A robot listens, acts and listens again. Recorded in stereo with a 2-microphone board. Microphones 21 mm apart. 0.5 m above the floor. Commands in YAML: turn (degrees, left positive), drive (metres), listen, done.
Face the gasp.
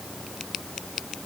listen: true
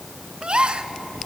turn: -65
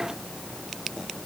listen: true
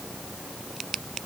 done: "I heard a gasp, but can't make it out now. It was about straight ahead or 50° right."